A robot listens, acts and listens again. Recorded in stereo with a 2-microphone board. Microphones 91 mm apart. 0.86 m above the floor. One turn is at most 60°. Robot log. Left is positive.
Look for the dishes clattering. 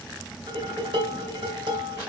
note: The dishes clattering: about 65° right or 115° right.
cmd yaw -60
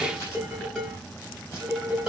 note: So it is at 10° right.
cmd yaw -10
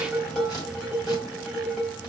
end: Found it: dishes clattering, straight ahead, 2 to 4 m away.